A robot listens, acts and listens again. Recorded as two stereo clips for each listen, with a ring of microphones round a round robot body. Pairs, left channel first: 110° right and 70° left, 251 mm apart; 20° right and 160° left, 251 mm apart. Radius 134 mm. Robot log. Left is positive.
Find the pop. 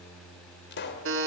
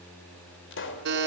note: The pop: 65° right.
cmd yaw -65
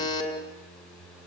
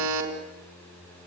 end: Facing where the pop came from. I can't hear it now.